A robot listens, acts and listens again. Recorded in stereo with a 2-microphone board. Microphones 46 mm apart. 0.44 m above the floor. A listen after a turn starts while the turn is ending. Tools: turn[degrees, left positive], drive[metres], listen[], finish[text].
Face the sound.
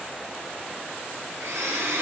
Thought: The blender: about 70° right or 110° right.
Action: turn[-70]
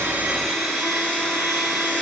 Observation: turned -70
Action: finish[Found it: a blender, straight ahead, 2 to 4 m away.]